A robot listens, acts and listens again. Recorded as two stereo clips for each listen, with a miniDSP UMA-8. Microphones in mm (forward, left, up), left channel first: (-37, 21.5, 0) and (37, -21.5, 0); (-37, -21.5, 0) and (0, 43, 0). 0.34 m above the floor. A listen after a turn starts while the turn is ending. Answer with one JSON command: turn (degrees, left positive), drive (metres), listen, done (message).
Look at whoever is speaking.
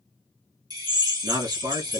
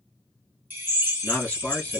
{"turn": -50}
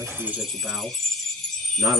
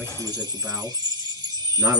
{"turn": 15}
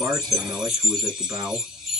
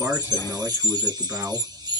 {"done": "Found it: a man speaking, straight ahead, 2 to 4 m away."}